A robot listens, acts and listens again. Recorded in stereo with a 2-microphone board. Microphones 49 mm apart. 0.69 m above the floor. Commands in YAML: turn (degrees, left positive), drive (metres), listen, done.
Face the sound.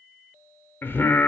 turn: 45
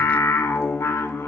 turn: 95
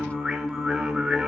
done: "Found it: singing, straight ahead, under 1 m away."